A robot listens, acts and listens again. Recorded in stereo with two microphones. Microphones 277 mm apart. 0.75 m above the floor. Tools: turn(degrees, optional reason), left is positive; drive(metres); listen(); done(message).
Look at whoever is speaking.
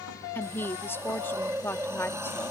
turn(degrees=30)
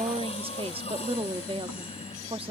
turn(degrees=-20, reason="So it is at 20° right.")
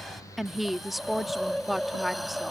done("Facing the woman speaking.")